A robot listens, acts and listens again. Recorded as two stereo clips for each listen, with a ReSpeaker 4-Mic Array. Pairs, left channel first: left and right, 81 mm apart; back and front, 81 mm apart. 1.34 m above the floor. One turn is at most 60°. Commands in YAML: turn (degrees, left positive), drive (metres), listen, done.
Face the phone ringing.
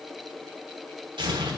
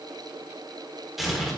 listen: true
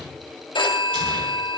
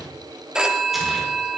turn: 60
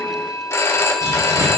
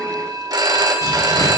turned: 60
turn: 35
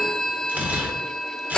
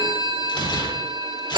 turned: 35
turn: 10
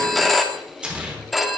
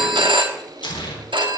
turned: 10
done: "Found it: a phone ringing, straight ahead."